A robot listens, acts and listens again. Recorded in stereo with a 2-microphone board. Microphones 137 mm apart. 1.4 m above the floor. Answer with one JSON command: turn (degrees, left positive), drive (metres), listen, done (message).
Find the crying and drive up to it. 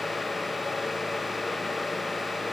{"listen": true}
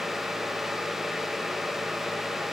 {"listen": true}
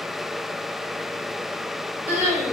{"turn": 50}
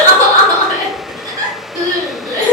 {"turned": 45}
{"turn": 80}
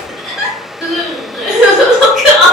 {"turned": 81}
{"drive": 1.0}
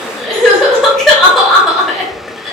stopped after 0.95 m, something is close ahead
{"done": "I am next to the crying."}